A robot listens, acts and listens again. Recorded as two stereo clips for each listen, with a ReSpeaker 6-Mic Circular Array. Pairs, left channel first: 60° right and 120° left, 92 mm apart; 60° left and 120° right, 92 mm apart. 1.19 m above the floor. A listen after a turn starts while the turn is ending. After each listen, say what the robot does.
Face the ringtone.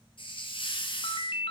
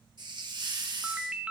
Turn 40° right.
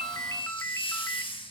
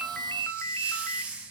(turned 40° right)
Facing the ringtone.